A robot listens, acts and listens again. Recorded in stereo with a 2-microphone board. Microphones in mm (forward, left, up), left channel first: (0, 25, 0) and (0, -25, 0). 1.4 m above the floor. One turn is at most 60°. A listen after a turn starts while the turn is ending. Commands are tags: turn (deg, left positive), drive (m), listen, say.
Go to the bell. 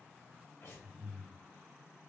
<listen/>
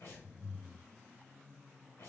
<listen/>
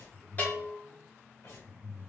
<turn deg="30"/>
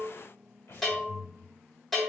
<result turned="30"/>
<drive m="1.0"/>
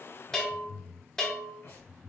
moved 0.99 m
<turn deg="10"/>
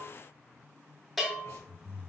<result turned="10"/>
<drive m="1.0"/>
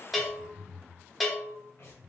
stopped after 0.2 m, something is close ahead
<say>Arrived at the bell, straight ahead.</say>